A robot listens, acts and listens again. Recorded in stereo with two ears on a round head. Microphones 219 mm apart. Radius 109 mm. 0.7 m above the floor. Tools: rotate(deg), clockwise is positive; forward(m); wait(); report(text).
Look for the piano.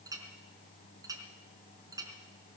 wait()
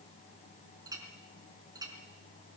wait()
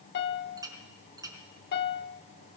rotate(-45)
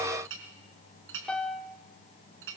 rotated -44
report("Facing the piano, 1 to 2 m away.")